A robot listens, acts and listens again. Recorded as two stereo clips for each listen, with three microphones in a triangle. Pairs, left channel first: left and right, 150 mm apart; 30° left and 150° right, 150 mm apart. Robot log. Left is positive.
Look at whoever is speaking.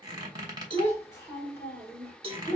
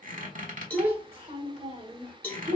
note: The child speaking: 170° left.
cmd yaw +170
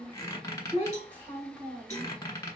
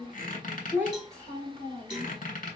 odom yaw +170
note: The child speaking is now 10° right.
cmd yaw -10
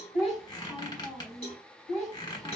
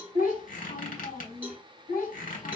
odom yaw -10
end: Found it: a child speaking, straight ahead.